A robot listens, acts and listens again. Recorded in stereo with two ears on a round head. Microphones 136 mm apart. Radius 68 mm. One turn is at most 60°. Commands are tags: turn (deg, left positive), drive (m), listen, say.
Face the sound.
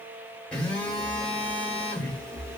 <turn deg="30"/>
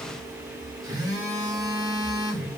<turn deg="-25"/>
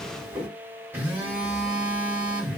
<turn deg="-15"/>
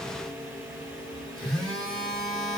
<say>Facing the phone buzzing.</say>